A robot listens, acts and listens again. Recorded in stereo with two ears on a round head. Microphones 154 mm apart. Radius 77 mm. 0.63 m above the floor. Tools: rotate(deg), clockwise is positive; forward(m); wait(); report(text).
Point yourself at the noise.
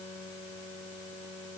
wait()
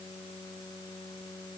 wait()
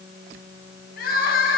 rotate(-55)
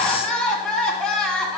report("Found it: crying, straight ahead, 1 to 2 m away.")